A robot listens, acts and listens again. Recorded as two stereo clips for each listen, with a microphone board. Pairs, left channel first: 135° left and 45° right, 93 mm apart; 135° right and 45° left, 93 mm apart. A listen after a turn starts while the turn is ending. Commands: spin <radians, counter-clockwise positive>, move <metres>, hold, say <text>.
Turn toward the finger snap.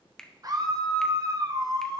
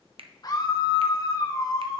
spin 0.87
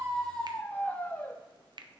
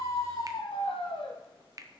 spin -0.17
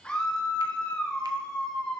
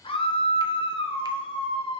hold
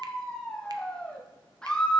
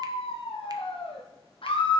hold
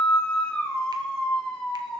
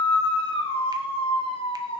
say I heard a finger snap from this way, but can't make it out now.